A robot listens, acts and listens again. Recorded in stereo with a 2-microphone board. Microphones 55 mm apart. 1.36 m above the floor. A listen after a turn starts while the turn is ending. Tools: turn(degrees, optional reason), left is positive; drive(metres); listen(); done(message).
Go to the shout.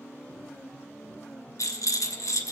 listen()
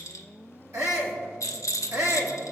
turn(degrees=-75, reason="The shout: about 75° right or 105° right.")
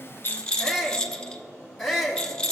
drive(metres=1.0)
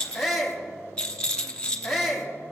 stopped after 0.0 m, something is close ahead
done("Blocked. The shout is further on, straight ahead.")